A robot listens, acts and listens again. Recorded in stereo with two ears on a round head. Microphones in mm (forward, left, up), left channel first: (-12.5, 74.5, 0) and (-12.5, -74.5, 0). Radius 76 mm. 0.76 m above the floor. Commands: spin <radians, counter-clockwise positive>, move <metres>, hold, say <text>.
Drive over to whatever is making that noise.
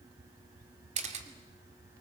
spin -0.79
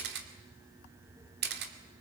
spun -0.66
spin -1.66
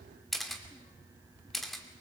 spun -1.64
move 1.0
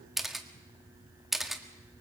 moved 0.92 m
move 1.0
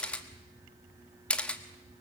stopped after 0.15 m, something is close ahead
spin 0.17
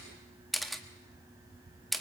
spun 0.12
say Arrived at the camera shutter, straight ahead.